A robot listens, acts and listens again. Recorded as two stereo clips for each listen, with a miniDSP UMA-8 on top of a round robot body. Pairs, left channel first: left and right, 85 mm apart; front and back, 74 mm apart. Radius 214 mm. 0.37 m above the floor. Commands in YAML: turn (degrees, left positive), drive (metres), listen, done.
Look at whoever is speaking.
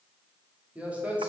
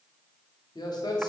turn: -15
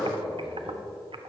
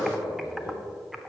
done: "Found it: a man speaking, straight ahead."